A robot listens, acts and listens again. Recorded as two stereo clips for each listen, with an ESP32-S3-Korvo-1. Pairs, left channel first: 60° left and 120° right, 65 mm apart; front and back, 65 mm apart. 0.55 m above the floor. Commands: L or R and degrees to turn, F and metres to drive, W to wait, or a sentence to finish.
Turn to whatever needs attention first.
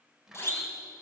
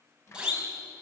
L105
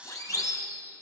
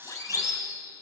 L30
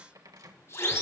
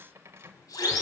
L15
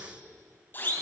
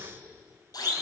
Found it: a siren, straight ahead.